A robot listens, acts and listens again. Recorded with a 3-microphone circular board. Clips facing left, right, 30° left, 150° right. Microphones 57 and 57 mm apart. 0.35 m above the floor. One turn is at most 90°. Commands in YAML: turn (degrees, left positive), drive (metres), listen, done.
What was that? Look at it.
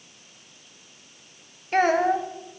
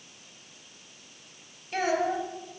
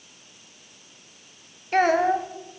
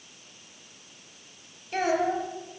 turn: 55
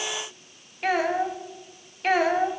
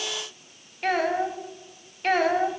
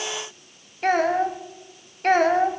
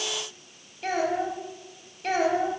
done: "Found it: a child speaking, straight ahead, 1 to 2 m away."